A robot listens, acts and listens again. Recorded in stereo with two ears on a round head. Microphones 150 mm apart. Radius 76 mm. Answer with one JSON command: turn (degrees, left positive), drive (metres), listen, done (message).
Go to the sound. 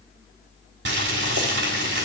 {"turn": -70}
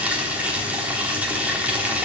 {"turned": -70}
{"turn": -10}
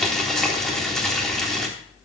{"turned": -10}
{"drive": 1.0}
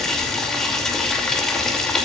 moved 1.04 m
{"drive": 1.0}
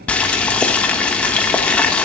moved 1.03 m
{"turn": 10}
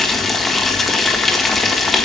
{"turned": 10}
{"drive": 1.0}
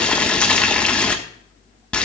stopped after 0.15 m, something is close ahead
{"turn": 10}
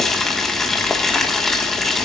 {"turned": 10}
{"done": "Arrived at the boiling, straight ahead."}